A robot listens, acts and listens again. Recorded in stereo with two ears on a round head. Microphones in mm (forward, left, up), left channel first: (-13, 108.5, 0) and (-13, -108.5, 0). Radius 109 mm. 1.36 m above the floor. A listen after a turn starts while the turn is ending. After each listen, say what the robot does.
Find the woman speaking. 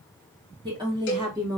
Turn 30° right.
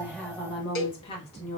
Turn 25° left.
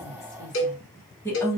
Turn 15° left.
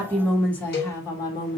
Turn 20° left.
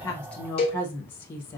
Turn 10° left.
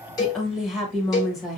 Found it: a woman speaking, straight ahead, 1 to 2 m away.